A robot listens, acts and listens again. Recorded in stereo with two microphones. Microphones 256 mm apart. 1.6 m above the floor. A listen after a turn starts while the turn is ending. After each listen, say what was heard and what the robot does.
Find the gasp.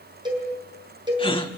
The gasp: about 20° left or 160° left. Turn 20° left.
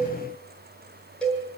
Keep listening.
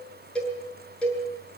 I heard a gasp, but can't make it out now. It was about straight ahead or 140° left.